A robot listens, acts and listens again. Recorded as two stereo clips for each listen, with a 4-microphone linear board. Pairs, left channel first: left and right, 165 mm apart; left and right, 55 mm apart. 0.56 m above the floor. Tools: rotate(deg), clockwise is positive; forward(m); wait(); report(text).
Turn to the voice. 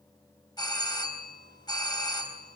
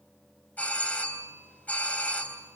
wait()
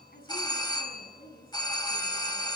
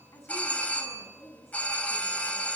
rotate(-70)
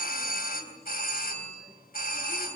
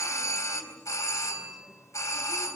wait()
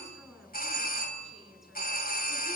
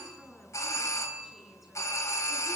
wait()
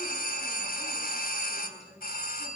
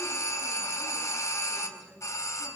report("Found it: a woman speaking, straight ahead, over 4 m away.")